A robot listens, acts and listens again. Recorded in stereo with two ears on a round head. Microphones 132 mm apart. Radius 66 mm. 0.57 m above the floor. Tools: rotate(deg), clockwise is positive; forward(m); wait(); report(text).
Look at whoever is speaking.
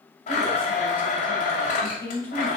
rotate(-30)
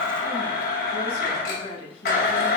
rotate(-140)
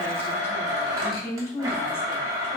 rotate(-20)
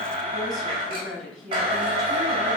report("Facing the woman speaking, 2 to 4 m away.")